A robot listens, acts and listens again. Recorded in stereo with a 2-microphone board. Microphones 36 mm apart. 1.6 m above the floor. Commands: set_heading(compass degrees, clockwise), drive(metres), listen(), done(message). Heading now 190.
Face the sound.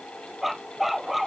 set_heading(220)
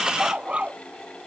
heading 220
set_heading(5)
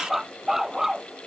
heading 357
set_heading(7)
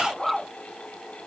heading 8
done("Facing the dog barking.")